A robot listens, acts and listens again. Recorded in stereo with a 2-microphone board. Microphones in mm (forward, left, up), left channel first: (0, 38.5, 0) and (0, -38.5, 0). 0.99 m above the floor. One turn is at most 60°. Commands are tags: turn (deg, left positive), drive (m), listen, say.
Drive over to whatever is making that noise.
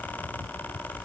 <listen/>
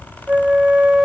<turn deg="-30"/>
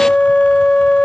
<turn deg="15"/>
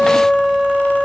<drive m="1.0"/>
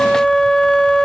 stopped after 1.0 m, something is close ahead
<turn deg="10"/>
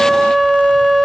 <say>Arrived at the flute, straight ahead.</say>